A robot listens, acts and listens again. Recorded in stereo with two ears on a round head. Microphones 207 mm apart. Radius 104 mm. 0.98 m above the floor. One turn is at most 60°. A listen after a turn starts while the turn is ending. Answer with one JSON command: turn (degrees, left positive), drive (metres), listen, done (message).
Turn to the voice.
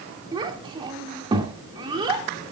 {"turn": -20}
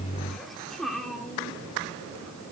{"done": "Found it: a child speaking, straight ahead, 2 to 4 m away."}